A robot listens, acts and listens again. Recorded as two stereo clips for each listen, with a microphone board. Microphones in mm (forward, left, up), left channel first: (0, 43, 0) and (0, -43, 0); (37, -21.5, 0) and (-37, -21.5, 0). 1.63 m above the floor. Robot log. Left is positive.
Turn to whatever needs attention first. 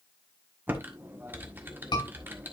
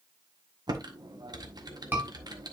note: The scream: 115° left.
cmd yaw +115
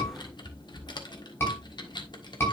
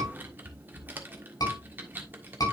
note: The scream is now 30° left.
cmd yaw +30
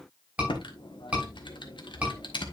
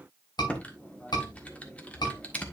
note: The scream is now 15° right.
cmd yaw -15
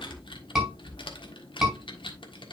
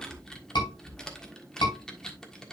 end: Facing the scream.